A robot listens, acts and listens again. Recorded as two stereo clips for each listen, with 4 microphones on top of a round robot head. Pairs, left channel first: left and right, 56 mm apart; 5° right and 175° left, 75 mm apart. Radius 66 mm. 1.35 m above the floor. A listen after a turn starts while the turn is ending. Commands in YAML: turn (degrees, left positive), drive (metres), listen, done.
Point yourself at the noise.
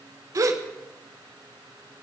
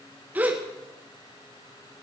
turn: -110
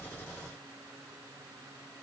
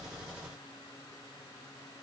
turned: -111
done: "I heard a gasp from this way, but can't make it out now."